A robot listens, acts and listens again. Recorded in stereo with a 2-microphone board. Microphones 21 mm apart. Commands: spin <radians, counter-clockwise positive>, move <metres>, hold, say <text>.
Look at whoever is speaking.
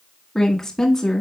spin 0.35
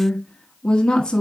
spin 2.44
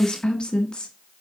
spin 0.87
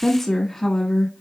spin 0.35
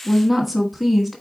say Found it: a woman speaking, straight ahead, 1 to 2 m away.